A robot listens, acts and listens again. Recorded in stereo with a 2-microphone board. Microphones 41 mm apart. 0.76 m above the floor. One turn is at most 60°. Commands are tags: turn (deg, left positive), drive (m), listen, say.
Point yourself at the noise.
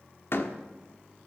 <turn deg="60"/>
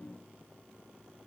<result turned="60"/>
<listen/>
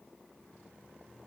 <say>I heard a door slam, but can't make it out now. It was about 5° left or 55° left.</say>